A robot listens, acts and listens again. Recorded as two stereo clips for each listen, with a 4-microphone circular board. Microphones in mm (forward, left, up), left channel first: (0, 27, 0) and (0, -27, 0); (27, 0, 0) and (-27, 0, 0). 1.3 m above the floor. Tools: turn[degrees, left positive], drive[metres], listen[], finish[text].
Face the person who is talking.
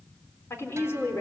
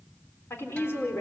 Thought: The woman speaking: 50° left.
Action: turn[50]
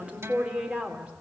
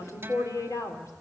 Thought: The woman speaking is now 20° right.
Action: turn[-20]
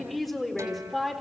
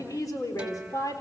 Action: finish[Facing the woman speaking, 2 to 4 m away.]